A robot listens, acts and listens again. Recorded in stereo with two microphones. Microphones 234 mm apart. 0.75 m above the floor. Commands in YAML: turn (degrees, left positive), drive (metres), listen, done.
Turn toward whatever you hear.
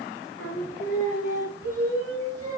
turn: 90
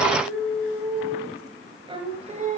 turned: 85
turn: -35
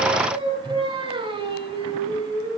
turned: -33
turn: -20
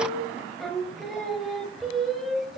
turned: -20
done: "Facing the singing."